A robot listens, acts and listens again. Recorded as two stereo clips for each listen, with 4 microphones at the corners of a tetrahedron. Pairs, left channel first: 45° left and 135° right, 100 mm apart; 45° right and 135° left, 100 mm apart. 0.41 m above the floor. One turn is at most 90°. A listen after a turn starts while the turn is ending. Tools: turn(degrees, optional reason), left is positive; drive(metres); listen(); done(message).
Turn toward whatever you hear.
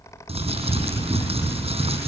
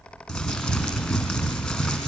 turn(degrees=-90, reason="The crumpling: 130° right.")
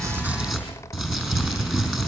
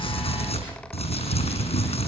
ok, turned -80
turn(degrees=-50, reason="The crumpling is now 50° right.")
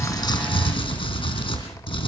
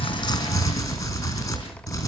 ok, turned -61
turn(degrees=10, reason="The crumpling is now 10° left.")
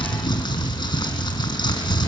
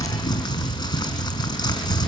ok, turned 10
done("Found it: crumpling, straight ahead, over 4 m away.")